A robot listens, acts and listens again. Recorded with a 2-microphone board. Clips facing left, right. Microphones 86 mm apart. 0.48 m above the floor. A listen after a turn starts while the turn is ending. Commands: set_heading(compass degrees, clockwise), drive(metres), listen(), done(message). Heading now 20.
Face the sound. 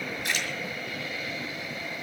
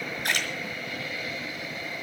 set_heading(70)
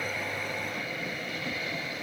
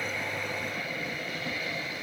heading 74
listen()
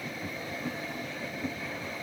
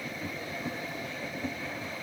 done("I heard a splash, but can't make it out now. It was about 5° left or 75° right.")